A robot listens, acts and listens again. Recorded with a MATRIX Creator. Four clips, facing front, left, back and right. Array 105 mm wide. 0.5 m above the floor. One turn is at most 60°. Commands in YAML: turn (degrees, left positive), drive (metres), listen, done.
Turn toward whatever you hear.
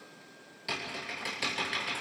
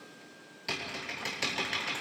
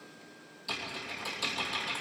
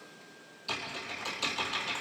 turn: 55
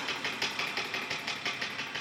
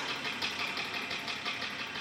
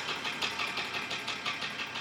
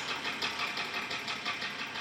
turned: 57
done: "Found it: typing on a keyboard, straight ahead."